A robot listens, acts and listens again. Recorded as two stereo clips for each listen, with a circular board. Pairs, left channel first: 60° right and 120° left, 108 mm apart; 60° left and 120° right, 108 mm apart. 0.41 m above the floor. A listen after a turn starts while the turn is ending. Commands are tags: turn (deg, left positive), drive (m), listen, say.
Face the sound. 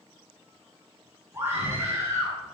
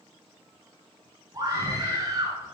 <turn deg="-175"/>
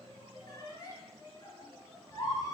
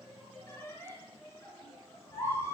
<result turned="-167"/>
<say>Facing the scream.</say>